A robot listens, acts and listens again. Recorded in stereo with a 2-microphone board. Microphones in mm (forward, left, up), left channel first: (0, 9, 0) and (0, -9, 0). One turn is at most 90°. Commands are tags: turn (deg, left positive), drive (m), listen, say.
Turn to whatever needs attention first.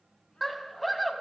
<turn deg="30"/>
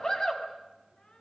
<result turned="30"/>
<turn deg="90"/>
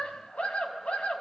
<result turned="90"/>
<turn deg="90"/>
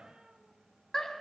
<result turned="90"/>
<turn deg="30"/>
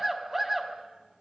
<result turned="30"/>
<turn deg="-10"/>
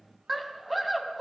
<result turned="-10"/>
<say>Facing the scream, over 4 m away.</say>